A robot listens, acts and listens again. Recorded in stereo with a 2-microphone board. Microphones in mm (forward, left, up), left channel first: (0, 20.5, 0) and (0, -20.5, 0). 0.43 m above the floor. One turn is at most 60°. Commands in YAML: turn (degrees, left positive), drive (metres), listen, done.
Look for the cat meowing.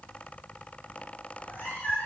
turn: 50
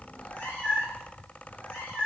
turn: 60
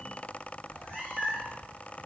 turn: 45
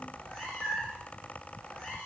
done: "Found it: a cat meowing, straight ahead."